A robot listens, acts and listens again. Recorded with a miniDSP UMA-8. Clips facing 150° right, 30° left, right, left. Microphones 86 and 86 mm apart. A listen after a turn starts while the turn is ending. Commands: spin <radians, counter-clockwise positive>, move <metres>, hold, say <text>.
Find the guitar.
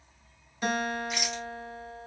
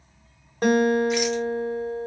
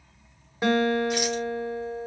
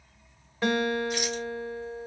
spin -0.26
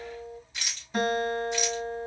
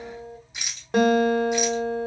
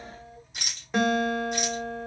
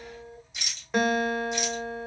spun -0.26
say Facing the guitar, 1 to 2 m away.